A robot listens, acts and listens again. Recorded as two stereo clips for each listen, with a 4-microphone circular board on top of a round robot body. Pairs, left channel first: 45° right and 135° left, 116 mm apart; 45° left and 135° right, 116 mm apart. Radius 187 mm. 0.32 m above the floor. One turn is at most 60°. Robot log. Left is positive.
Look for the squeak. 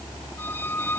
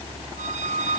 note: The squeak: 120° right.
cmd yaw -60
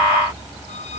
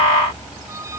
note: Nothing new. It was at 60° right.
cmd yaw -60
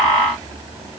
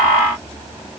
cmd idle
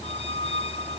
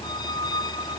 note: The squeak is now 10° right.
cmd yaw -10
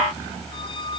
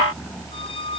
cmd idle
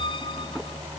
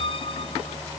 cmd idle
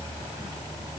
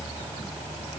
end: I heard a squeak from this way, but can't make it out now.